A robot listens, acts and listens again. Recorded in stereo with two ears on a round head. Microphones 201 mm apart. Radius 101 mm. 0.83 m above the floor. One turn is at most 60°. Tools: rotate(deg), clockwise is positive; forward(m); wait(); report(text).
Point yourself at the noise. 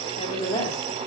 rotate(-20)
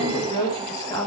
rotate(-30)
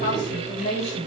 rotate(-25)
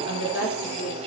rotate(-60)
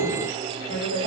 rotate(-60)
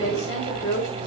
rotate(-35)
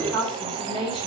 report("Facing the woman speaking, 2 to 4 m away.")